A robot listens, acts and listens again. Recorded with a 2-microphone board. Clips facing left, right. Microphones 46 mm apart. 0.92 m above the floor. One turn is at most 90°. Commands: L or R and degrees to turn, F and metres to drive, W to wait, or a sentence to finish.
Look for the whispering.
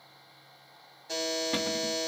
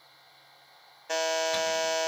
W
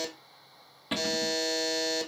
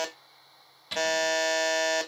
W
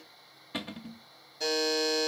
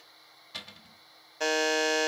I can't make out whispering, only a buzzer and a cupboard door.